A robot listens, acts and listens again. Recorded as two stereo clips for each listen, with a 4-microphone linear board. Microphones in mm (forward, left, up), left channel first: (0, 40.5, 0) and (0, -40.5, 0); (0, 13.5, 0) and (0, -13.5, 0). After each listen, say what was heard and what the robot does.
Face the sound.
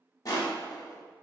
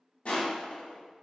The crushing: about 45° left or 135° left. Turn 45° left.
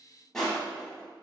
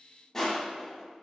Found it: crushing, straight ahead, under 1 m away.